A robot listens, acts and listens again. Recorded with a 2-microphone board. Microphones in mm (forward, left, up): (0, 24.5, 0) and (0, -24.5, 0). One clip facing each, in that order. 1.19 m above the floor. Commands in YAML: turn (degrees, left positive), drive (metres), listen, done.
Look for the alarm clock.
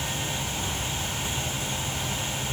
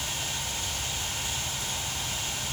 listen: true
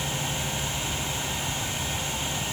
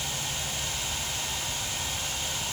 listen: true
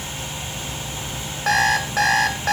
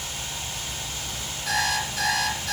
turn: 55
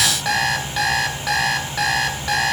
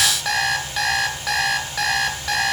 done: "Found it: an alarm clock, straight ahead."